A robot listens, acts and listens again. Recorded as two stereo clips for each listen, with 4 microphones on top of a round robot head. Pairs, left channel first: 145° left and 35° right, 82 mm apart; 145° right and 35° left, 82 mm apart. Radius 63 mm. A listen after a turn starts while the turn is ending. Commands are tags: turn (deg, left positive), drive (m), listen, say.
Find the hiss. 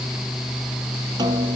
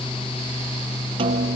<listen/>
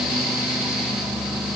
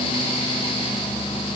<listen/>
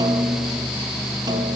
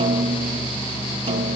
<say>I can't make out a hiss, only a snare drum.</say>